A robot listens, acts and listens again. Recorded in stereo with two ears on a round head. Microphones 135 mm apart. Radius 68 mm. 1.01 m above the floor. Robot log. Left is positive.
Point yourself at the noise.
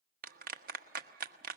note: The clap: about 65° right or 115° right.
cmd yaw -65
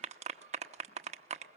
note: So it is at 45° right.
cmd yaw -45
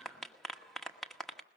end: Facing the clap, 1 to 2 m away.